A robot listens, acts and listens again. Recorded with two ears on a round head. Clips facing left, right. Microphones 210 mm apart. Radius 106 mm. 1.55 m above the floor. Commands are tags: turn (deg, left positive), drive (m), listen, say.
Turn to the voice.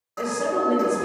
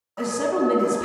<turn deg="-90"/>
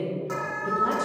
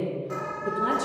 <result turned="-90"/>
<say>Facing the woman speaking.</say>